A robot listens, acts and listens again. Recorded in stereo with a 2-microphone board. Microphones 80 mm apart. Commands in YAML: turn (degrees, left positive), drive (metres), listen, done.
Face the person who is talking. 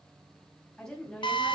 turn: 30
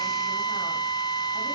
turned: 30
listen: true
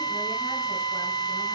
listen: true
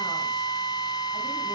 done: "I heard a woman speaking, but can't make it out now. It was about 20° right or 140° left."